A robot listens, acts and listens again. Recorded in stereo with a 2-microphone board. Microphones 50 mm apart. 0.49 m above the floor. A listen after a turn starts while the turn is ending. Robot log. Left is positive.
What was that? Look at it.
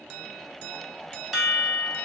cmd yaw +30
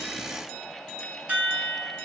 note: So it is at 30° right.
cmd yaw -30
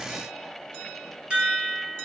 note: The chime is now 20° right.
cmd yaw -20
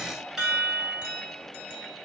end: Found it: a chime, straight ahead.